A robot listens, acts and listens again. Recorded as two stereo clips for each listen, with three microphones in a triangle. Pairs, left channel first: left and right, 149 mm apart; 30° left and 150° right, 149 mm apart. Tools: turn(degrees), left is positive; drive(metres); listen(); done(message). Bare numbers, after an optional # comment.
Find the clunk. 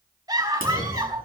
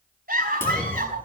# The clunk: 105° left.
turn(105)
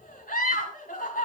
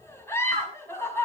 done("I heard a clunk from this way, but can't make it out now.")